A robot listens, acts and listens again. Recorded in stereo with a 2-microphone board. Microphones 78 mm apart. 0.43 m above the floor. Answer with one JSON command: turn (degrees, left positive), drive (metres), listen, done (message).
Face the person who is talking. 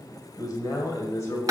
{"turn": 35}
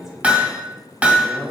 {"turn": -25}
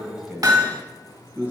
{"turn": -20}
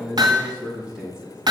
{"turn": -10}
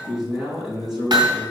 {"done": "Facing the man speaking, 2 to 4 m away."}